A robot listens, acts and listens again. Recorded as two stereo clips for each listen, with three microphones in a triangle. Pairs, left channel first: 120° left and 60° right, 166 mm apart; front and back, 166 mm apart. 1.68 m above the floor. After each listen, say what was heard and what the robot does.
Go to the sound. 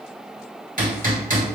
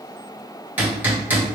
The hammering: 100° right. Turn 100° right.
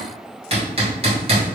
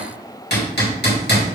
Drive 1.0 m forward.
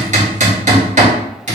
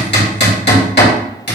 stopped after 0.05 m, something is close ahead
The hammering is now 10° right. Turn 10° right.
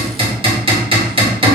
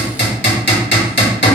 Blocked. The hammering is further on, straight ahead.